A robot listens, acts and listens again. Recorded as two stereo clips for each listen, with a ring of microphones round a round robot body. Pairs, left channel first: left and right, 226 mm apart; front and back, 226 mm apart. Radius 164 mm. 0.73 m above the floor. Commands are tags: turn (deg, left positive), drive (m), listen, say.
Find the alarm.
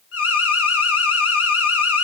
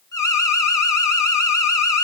<turn deg="75"/>
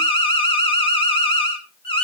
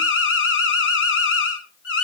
<turn deg="25"/>
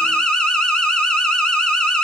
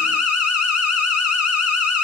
<say>Found it: an alarm, straight ahead.</say>